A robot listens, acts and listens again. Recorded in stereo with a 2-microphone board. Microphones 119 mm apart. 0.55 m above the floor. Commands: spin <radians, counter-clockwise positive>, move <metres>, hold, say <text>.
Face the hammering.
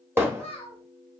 spin -0.35
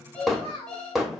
say Found it: hammering, straight ahead.